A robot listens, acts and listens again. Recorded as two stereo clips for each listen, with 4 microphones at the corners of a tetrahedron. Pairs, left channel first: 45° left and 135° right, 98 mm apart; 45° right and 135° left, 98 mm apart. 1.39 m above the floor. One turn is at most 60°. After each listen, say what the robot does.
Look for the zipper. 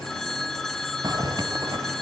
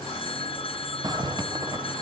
Turn 60° left.
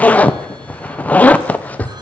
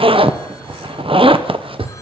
Turn 60° left.
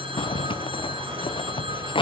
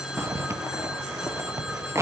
Turn 60° left.
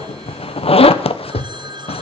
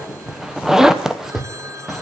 Turn 50° left.
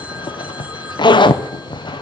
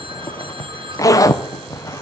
Facing the zipper.